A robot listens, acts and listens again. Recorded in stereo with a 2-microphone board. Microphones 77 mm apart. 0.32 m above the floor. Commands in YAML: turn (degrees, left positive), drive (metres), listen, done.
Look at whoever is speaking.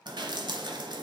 listen: true
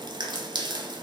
listen: true
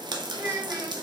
turn: -35
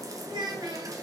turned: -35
turn: -105
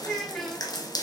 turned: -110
done: "Found it: a child speaking, straight ahead."